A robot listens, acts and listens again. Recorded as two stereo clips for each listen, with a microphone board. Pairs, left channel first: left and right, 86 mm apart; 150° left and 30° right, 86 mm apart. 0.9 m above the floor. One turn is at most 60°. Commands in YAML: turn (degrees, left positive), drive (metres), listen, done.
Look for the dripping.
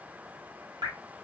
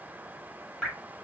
turn: -60
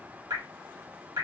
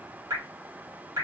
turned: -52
turn: -60
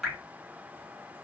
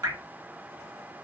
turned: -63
done: "Found it: dripping, straight ahead, 1 to 2 m away."